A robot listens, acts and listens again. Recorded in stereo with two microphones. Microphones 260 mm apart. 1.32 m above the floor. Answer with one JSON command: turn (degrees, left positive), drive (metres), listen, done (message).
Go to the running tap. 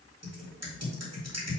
{"listen": true}
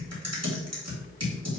{"listen": true}
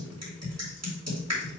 {"done": "I can't make out a running tap to turn to."}